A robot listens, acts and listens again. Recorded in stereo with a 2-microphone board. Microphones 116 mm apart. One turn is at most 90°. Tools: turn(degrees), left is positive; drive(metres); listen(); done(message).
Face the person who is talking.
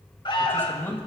turn(degrees=20)
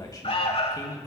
turn(degrees=90)
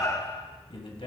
turn(degrees=70)
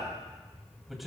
done("Found it: a man speaking, straight ahead, 1 to 2 m away.")